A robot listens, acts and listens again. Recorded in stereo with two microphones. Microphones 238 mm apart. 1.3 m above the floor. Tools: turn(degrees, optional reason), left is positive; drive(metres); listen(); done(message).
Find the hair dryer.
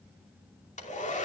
turn(degrees=30, reason="The hair dryer: about 30° left or 150° left.")
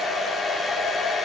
done("Facing the hair dryer, 2 to 4 m away.")